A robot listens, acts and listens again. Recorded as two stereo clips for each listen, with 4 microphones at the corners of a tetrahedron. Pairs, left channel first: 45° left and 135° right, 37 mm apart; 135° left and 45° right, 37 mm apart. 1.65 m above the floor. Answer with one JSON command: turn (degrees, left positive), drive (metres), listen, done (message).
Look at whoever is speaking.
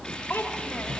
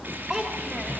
{"turn": 40}
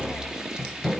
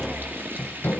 {"listen": true}
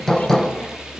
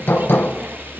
{"listen": true}
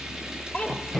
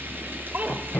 {"done": "Facing the child speaking."}